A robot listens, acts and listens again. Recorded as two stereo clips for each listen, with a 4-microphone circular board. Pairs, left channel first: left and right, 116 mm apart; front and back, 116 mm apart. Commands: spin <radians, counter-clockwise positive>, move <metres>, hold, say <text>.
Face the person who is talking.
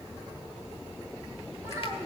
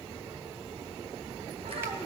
spin -2.71
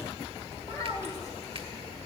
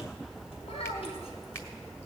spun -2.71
spin 0.52
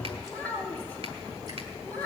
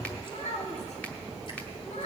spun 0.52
spin 0.26
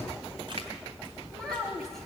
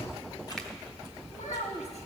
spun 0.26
say Found it: a child speaking, straight ahead, 2 to 4 m away.